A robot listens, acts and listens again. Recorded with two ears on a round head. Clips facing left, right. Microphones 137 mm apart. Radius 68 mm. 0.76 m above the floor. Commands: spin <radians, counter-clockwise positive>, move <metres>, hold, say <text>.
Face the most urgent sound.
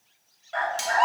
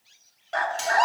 spin -0.87
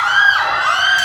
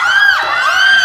spin -1.22
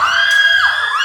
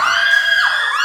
spin -0.26
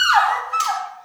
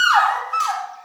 say Facing the scream, 1 to 2 m away.